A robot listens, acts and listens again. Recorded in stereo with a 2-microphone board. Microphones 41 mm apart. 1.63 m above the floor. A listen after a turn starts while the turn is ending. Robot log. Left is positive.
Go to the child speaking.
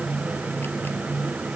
cmd idle
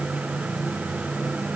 cmd idle
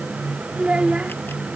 note: The child speaking: about 30° right or 150° right.
cmd yaw -30
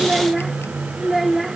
cmd fwd 1.0
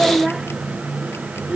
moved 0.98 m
note: The child speaking is now 10° right.
cmd yaw -10
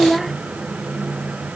cmd fwd 1.0
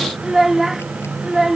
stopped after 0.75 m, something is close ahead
note: The child speaking is now 10° right.
cmd yaw -10
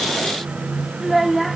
end: Arrived at the child speaking, straight ahead.